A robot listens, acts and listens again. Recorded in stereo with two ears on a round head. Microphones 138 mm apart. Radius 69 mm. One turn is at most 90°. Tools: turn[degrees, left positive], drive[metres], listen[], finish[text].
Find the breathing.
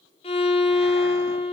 Action: listen[]
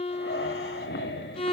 Action: turn[90]
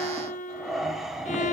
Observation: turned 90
Action: finish[Facing the breathing, 2 to 4 m away.]